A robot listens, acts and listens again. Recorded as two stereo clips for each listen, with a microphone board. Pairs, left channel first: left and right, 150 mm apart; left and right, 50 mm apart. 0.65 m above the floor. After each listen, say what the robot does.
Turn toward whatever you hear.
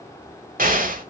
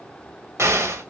Turn 65° right.
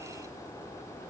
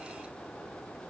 Keep listening.
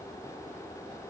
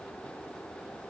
I heard an explosion, but can't make it out now. It was about straight ahead or 50° right.